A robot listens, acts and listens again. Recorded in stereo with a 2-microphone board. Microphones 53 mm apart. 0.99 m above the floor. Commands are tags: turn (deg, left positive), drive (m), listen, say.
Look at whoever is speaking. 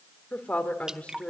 <turn deg="20"/>
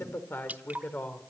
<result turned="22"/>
<turn deg="35"/>
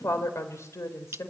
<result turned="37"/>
<turn deg="120"/>
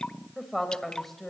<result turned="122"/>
<say>Facing the woman speaking, over 4 m away.</say>